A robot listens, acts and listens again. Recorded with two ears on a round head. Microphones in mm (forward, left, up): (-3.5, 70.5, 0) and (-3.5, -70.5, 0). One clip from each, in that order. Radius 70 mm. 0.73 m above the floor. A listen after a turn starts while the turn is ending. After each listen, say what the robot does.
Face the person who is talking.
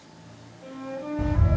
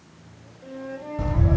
Keep listening.
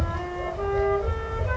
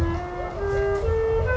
Keep listening.
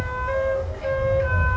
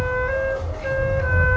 I can't make out anyone speaking, only a bird and a flute.